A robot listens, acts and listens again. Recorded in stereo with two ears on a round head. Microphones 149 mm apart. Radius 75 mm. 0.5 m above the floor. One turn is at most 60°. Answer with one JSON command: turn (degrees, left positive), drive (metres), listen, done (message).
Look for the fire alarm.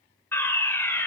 {"turn": 30}
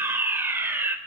{"turn": -15}
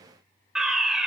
{"done": "Facing the fire alarm, 2 to 4 m away."}